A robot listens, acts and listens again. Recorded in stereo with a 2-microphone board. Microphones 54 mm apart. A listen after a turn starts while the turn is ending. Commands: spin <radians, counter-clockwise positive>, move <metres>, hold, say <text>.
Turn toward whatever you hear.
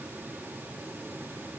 hold
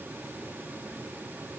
hold
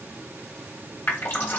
spin 0.70
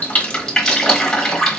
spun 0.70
say Facing the dripping, 1 to 2 m away.